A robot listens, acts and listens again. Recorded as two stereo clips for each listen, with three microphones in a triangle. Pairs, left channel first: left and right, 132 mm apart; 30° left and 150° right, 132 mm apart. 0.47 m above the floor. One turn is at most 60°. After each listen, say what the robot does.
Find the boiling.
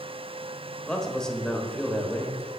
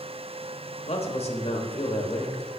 Keep listening.
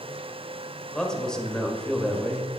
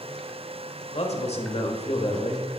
Keep listening.
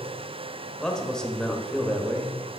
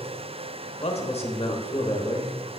I can't make out boiling, only a man speaking.